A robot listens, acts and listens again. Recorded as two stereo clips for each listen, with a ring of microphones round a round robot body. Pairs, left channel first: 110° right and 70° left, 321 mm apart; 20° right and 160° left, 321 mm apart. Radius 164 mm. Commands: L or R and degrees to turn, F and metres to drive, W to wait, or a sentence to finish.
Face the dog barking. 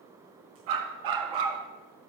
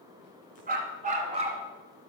L85
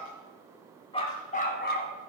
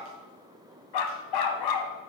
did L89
R55
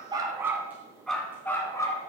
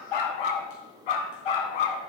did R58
R30
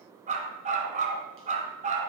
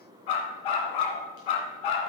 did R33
Facing the dog barking, 2 to 4 m away.